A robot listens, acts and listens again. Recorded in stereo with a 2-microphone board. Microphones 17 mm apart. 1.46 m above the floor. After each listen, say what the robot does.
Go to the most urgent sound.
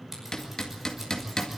Keep listening.
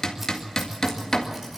Keep listening.
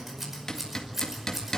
I can't make out anything urgent, only hammering and scissors.